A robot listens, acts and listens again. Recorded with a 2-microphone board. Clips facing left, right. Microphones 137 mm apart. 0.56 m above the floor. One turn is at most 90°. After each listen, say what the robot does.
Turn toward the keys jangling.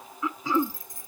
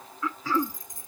Turn 20° right.
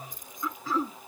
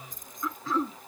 Turn 90° right.
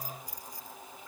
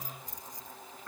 Turn 20° right.
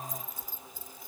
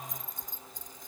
Turn 10° left.
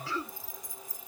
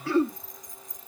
Found it: keys jangling, straight ahead.